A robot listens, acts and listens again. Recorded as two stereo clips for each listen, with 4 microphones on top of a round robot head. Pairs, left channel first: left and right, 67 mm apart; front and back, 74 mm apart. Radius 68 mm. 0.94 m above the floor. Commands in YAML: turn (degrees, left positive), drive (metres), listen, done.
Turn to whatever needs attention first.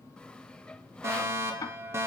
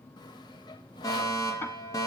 turn: -40
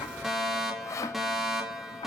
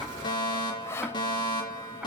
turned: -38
done: "Facing the fire alarm."